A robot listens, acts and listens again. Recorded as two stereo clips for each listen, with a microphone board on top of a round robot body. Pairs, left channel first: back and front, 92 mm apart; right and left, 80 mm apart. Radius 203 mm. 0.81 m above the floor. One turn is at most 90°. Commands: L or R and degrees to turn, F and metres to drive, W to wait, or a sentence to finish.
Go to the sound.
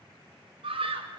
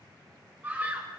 L20
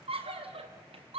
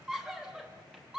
F1.0
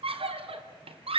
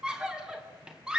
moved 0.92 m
L10
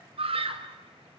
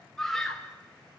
F1.0
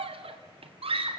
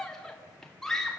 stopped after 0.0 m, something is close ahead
Blocked. The scream is further on, straight ahead.